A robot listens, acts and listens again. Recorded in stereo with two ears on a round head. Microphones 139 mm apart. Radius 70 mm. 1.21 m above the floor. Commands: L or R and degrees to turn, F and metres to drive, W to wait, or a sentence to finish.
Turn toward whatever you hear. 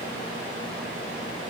W
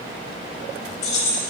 L45
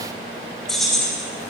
Facing the keys jangling, 1 to 2 m away.